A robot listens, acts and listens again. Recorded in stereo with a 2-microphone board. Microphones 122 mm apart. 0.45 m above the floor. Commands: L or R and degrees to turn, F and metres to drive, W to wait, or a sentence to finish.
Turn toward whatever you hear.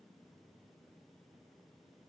W
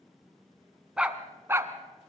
R20
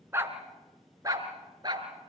R35
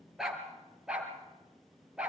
Facing the dog barking.